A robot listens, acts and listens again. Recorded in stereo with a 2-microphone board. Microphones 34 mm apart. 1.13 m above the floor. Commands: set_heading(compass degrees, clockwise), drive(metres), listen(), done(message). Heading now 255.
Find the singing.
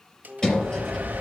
set_heading(280)
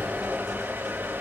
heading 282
listen()
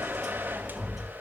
listen()
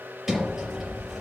done("I heard singing, but can't make it out now. It was about 5° left or 130° right.")